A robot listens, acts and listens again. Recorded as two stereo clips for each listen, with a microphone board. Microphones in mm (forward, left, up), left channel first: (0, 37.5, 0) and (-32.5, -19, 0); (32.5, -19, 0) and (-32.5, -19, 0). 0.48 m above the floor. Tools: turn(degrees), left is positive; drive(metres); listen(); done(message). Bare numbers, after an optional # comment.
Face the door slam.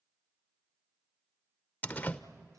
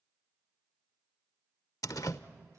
done("Facing the door slam, under 1 m away.")